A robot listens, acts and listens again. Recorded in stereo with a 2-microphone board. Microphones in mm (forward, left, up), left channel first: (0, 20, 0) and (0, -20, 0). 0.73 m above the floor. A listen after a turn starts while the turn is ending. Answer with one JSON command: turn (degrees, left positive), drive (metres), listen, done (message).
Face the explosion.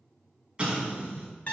{"turn": -25}
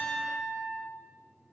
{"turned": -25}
{"listen": true}
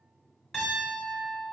{"done": "I heard an explosion, but can't make it out now. It was about straight ahead or 130° right."}